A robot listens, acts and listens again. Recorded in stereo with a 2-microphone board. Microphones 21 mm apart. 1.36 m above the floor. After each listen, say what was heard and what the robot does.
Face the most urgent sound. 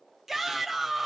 The shout: about 20° right or 160° right. Turn 20° right.
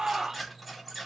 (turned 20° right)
So it is at 140° right. Turn 140° right.
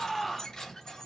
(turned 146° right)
The shout is now 10° left. Turn 10° left.
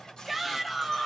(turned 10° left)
Facing the shout.